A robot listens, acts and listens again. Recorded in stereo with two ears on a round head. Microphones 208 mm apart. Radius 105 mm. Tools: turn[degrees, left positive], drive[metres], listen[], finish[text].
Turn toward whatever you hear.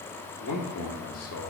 Thought: The man speaking: about 75° left or 105° left.
Action: turn[75]
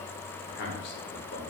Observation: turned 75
Thought: So it is at 50° left.
Action: turn[50]
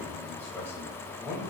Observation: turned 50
Thought: The man speaking is now 15° left.
Action: turn[15]
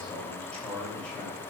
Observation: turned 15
Action: finish[Found it: a man speaking, straight ahead.]